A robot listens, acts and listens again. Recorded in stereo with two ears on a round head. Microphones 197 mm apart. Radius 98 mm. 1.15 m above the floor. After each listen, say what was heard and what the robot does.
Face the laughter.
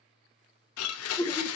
The laughter: about 15° left or 165° left. Turn 15° left.
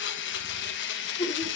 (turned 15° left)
So it is at 150° left. Turn 150° left.
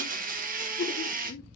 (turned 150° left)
The laughter is now 55° left. Turn 55° left.
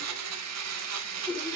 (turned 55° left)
Keep listening.
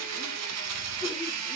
Keep listening.
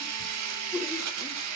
I heard laughter from this way, but can't make it out now.